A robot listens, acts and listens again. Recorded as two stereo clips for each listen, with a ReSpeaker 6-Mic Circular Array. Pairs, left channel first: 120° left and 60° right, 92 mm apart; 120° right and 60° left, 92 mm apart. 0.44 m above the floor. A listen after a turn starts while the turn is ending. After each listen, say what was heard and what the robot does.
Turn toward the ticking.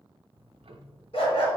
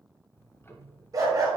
The ticking: 60° right. Turn 60° right.
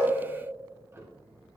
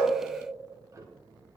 Facing the ticking, under 1 m away.